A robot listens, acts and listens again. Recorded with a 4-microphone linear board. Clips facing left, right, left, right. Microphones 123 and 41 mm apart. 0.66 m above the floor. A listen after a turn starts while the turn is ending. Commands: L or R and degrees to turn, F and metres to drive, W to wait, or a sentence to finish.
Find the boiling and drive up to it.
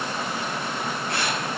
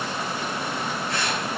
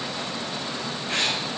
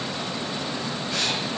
W
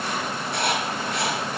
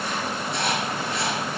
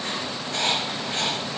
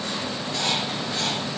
W
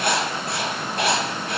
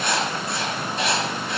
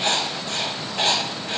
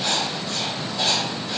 I can't make out boiling to turn to.